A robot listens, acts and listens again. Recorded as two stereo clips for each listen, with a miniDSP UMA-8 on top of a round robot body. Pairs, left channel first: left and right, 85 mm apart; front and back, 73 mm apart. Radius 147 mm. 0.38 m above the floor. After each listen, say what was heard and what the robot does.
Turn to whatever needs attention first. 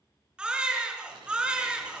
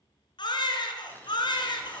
The baby crying: 10° right. Turn 10° right.
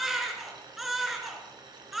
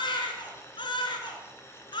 Facing the baby crying, 2 to 4 m away.